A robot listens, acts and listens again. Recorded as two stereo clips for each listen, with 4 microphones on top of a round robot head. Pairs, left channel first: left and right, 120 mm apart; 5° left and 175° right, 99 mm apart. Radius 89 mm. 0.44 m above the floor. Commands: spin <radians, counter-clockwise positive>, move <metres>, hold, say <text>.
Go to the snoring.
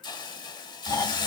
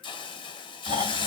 spin 2.71
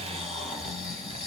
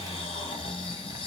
move 1.0
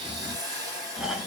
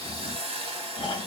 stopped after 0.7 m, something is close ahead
spin -0.17
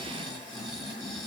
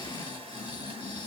say Arrived at the snoring, straight ahead.